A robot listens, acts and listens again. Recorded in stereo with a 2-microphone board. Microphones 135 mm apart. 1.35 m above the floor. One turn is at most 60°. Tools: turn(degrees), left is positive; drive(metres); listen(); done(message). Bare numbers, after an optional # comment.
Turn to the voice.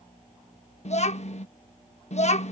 # The child speaking: about 55° left or 125° left.
turn(55)
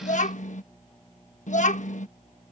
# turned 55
# So it is at 65° left.
turn(60)
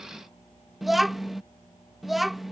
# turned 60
done("Found it: a child speaking, straight ahead.")